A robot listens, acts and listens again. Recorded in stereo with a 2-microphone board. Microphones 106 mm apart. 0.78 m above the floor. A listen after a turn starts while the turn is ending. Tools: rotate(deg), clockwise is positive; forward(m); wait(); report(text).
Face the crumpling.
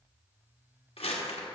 rotate(-70)
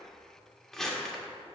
report("Facing the crumpling, 1 to 2 m away.")